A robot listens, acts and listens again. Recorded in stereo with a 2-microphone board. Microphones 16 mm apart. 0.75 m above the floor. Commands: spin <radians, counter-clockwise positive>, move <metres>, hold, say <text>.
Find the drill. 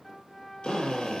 spin 1.31
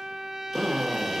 spin 0.44
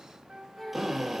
say Facing the drill, 2 to 4 m away.